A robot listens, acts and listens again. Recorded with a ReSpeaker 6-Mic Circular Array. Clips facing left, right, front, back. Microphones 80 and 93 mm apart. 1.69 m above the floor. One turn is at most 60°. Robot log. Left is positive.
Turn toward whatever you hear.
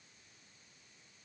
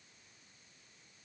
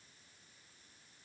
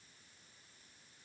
cmd idle
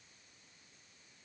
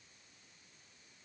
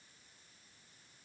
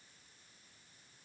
cmd idle
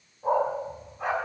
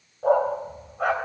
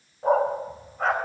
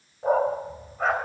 note: The dog barking: 90° right.
cmd yaw -60
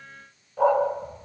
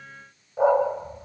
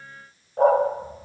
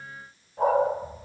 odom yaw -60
note: The dog barking is now 20° right.
cmd yaw -20
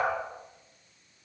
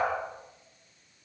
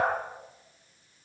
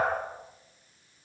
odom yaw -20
cmd idle
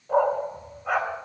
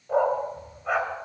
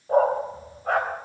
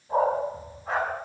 end: Found it: a dog barking, straight ahead, 2 to 4 m away.